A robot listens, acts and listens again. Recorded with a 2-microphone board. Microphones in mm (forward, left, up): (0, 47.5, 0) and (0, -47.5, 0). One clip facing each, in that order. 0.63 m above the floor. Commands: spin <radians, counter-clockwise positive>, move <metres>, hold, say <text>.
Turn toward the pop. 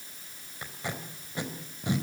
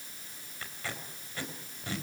hold
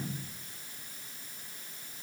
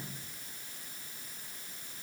hold
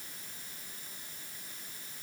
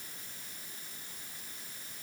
say I can't make out a pop, only tape being pulled.